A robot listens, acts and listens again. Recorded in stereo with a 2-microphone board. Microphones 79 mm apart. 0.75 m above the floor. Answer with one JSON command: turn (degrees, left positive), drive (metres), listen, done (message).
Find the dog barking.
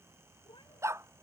{"turn": -35}
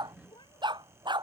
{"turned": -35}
{"turn": -110}
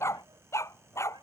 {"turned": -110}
{"turn": 35}
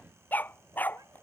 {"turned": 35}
{"turn": 20}
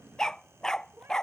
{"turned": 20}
{"done": "Facing the dog barking."}